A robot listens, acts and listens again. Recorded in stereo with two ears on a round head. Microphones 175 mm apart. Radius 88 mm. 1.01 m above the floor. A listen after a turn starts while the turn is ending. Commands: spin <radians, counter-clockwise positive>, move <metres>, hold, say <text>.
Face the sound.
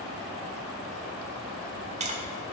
spin -0.61
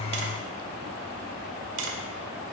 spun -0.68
spin -1.83
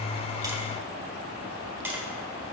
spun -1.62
spin -0.17
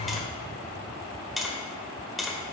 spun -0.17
say Found it: tapping, straight ahead.